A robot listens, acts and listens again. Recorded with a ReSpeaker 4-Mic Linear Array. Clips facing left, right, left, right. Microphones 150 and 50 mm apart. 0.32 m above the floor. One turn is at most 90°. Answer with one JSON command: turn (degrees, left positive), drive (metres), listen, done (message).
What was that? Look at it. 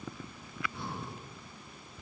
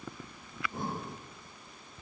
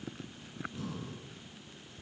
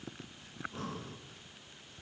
{"turn": -45}
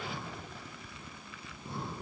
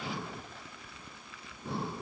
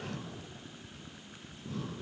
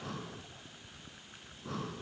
{"turn": -90}
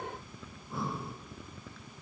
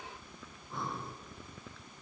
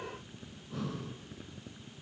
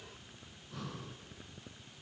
{"done": "Found it: breathing, straight ahead."}